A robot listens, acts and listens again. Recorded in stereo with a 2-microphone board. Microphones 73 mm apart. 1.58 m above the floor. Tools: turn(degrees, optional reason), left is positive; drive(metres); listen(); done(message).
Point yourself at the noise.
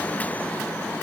listen()
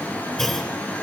turn(degrees=30)
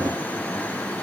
listen()
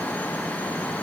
done("I heard a clunk, but can't make it out now. It was about 25° right or 145° left.")